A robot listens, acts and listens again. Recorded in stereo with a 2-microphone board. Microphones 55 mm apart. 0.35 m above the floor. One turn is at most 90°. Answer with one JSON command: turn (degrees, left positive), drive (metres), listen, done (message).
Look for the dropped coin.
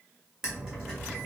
{"turn": -30}
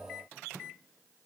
{"listen": true}
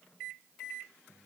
{"done": "I heard a dropped coin, but can't make it out now. It was about 15° left or 135° right."}